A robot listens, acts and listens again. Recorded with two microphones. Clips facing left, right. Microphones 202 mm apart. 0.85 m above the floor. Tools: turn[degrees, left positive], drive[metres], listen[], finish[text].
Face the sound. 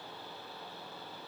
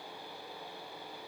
Action: listen[]
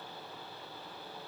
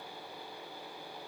Action: listen[]
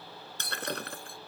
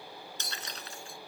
Thought: The breaking glass: about 60° left or 120° left.
Action: turn[60]
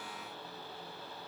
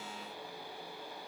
Action: listen[]
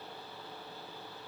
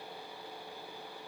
Action: finish[I heard breaking glass, but can't make it out now. It was about straight ahead or 60° left.]